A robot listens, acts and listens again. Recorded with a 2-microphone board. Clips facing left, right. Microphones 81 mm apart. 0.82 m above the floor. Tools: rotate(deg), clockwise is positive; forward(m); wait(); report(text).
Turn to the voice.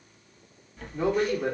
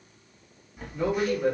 rotate(-15)
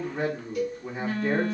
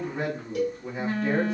report("Found it: a man speaking, straight ahead.")